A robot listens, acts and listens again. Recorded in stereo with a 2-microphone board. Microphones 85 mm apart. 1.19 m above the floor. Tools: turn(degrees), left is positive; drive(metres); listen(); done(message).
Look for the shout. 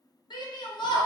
turn(degrees=60)
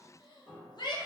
turn(degrees=60)
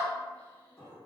listen()
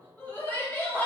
turn(degrees=20)
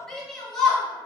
done("Found it: a shout, straight ahead, under 1 m away.")